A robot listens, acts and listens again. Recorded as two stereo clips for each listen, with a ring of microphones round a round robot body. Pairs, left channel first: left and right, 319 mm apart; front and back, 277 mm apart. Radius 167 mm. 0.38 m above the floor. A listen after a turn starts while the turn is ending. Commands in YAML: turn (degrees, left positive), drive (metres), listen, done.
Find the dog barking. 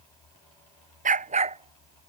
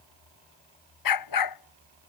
turn: -20
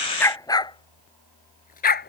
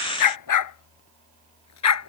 turn: 30
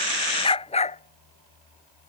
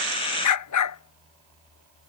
turn: 20
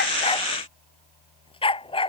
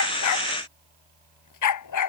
turn: 15
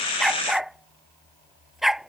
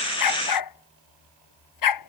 done: "Found it: a dog barking, straight ahead."